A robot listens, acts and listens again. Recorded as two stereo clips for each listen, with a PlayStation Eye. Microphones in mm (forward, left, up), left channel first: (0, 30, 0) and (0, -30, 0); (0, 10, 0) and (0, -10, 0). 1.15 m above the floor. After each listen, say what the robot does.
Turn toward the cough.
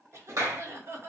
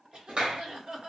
Turn 45° right.
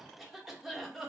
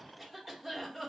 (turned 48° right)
Facing the cough.